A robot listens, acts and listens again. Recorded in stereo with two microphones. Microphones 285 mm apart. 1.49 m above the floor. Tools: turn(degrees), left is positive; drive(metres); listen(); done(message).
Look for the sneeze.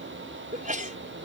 turn(degrees=-25)
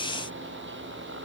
listen()
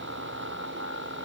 done("I heard a sneeze, but can't make it out now. It was about straight ahead or 130° right.")